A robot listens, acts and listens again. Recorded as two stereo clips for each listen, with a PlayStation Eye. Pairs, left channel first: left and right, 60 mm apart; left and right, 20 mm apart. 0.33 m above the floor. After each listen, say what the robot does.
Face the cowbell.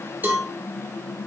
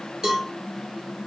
Turn 30° right.
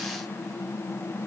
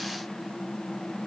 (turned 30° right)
Keep listening.
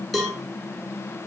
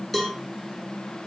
Facing the cowbell, 1 to 2 m away.